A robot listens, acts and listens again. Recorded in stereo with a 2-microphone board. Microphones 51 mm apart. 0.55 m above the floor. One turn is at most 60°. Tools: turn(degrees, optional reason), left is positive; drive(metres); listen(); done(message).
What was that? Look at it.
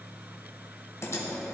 turn(degrees=60, reason="The typing on a keyboard: about 65° left or 115° left.")
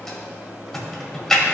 done("Facing the typing on a keyboard, 1 to 2 m away.")